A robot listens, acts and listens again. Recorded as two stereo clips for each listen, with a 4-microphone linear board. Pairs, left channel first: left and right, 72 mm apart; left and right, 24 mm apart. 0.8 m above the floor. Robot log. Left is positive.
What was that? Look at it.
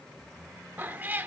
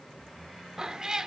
note: The cat meowing: about 25° right or 155° right.
cmd yaw -25
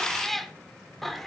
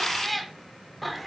end: Found it: a cat meowing, straight ahead, under 1 m away.